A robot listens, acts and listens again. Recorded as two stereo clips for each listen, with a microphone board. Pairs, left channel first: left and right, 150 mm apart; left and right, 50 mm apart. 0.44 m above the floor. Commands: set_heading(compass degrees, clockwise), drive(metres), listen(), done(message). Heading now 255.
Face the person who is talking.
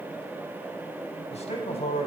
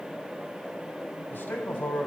set_heading(215)
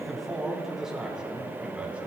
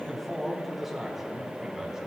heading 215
set_heading(225)
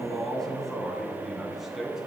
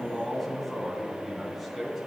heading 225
done("Found it: a man speaking, straight ahead.")